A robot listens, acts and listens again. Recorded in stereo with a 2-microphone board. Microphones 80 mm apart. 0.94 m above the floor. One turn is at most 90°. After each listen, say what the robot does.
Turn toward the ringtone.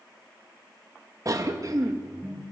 Turn 20° right.
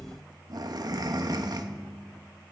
Found it: a ringtone, straight ahead.